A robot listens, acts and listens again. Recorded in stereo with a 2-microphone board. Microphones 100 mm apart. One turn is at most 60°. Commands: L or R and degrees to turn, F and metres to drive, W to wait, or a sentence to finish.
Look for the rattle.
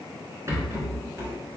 R30
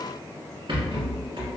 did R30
R60
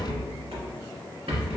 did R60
R60
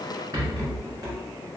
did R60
R40
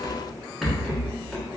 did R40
Facing the rattle.